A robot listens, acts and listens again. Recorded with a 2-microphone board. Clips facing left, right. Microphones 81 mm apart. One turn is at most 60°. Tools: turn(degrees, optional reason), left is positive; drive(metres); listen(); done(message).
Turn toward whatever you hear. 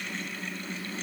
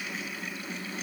listen()
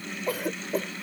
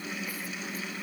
turn(degrees=60)
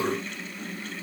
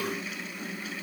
turn(degrees=30, reason="Nothing new. It was at 30° left.")
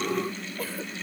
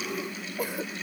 turn(degrees=-15, reason="The cough is now 15° right.")
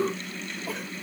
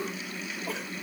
listen()
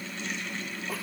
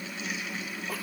listen()
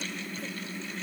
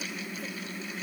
done("Facing where the cough came from. I can't hear it now.")